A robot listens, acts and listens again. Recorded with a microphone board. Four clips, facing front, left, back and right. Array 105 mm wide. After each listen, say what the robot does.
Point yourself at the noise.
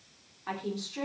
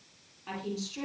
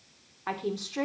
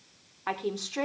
Turn 115° right.
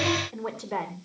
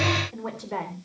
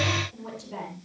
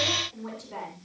Turn 30° left.
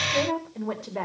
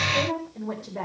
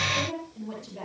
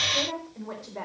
Found it: a woman speaking, straight ahead.